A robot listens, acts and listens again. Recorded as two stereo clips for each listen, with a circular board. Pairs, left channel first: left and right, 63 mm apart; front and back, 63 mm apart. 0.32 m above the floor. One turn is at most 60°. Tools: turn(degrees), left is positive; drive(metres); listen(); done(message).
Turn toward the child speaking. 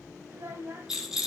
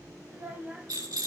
turn(degrees=-60)
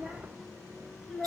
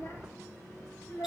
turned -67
done("Found it: a child speaking, straight ahead.")